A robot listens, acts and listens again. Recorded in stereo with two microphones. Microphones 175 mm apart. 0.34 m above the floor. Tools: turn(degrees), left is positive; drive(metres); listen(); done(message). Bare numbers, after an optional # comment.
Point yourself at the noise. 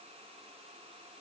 listen()
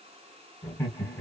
turn(30)
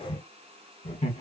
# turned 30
# So it is at 130° left.
turn(130)
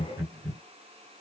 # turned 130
# The laughter is now 25° right.
turn(-25)
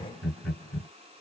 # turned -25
# The laughter is now 10° left.
turn(10)
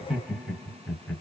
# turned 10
done("Found it: laughter, straight ahead.")